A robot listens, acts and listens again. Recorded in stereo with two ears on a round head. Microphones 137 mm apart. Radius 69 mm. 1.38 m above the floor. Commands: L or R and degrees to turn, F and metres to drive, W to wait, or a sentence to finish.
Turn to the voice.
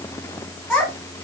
L30
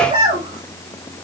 R35
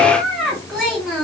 Found it: a child speaking, straight ahead, 2 to 4 m away.